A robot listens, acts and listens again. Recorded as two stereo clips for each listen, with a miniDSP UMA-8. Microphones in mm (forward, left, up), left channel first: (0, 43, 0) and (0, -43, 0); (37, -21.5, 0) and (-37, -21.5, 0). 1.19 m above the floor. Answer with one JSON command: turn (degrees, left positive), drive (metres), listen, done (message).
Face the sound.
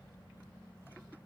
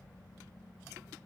{"listen": true}
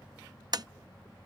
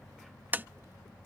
{"turn": -120}
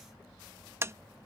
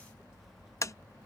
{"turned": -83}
{"turn": -35}
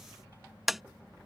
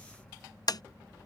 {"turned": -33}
{"done": "Facing the tapping."}